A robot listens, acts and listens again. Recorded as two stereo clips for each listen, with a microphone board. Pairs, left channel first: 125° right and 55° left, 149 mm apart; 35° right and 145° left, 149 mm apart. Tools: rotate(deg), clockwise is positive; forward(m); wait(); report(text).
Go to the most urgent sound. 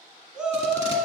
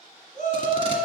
rotate(30)
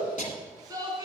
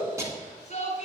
forward(1.0)
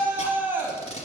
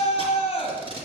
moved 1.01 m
rotate(15)
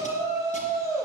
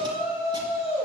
forward(1.0)
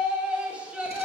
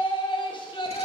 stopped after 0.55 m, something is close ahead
rotate(20)
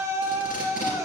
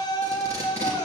report("Arrived at the shout, straight ahead.")